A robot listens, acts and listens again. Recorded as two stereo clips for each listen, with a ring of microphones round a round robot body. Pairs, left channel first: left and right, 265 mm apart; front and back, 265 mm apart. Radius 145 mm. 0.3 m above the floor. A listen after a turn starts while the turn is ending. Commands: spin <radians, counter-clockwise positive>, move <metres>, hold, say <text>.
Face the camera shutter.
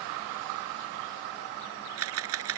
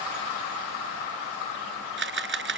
spin -2.36
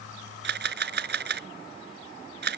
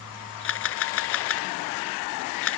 spin -0.70
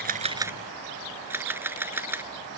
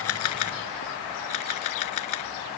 spin -0.17
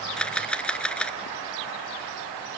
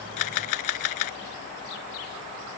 say Facing the camera shutter.